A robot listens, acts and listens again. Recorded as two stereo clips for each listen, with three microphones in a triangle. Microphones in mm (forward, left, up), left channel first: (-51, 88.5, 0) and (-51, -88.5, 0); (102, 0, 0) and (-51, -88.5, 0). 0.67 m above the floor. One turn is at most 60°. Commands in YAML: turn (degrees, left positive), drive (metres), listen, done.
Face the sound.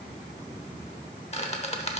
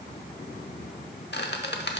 turn: 40
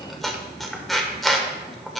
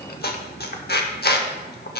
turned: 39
done: "Facing the squeak, under 1 m away."